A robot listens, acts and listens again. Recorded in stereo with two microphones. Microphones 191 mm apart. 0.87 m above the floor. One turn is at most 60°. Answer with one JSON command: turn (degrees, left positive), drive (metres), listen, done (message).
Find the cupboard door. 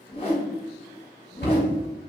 {"turn": 60}
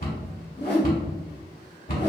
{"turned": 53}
{"turn": 50}
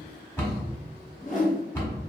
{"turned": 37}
{"turn": 15}
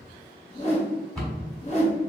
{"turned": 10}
{"done": "Facing the cupboard door, 1 to 2 m away."}